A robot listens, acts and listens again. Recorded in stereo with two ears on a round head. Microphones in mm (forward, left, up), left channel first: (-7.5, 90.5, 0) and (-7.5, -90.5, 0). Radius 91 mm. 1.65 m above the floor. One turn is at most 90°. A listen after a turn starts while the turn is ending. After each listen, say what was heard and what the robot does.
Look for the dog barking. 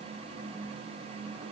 Keep listening.
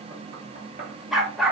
Turn 30° left.
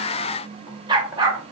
So it is at 20° right. Turn 20° right.
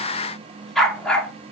Facing the dog barking, 1 to 2 m away.